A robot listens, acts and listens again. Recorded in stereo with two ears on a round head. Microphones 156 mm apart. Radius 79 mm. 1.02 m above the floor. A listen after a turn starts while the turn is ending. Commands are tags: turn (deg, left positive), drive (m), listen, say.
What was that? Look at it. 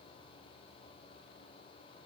<listen/>
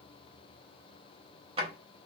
<turn deg="-30"/>
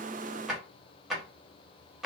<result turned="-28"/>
<say>Found it: a drawer, straight ahead.</say>